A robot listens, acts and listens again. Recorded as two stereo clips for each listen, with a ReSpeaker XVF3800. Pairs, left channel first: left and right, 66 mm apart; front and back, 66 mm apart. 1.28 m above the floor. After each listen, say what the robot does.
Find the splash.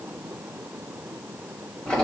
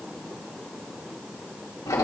Keep listening.
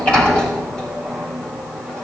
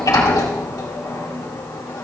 Keep listening.
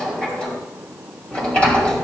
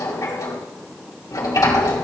I can't make out a splash to turn to.